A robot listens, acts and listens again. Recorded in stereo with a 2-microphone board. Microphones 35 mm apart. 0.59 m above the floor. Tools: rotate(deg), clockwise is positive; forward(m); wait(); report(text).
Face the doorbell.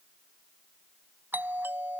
rotate(65)
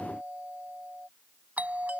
rotate(45)
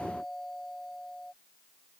report("Found it: a doorbell, straight ahead.")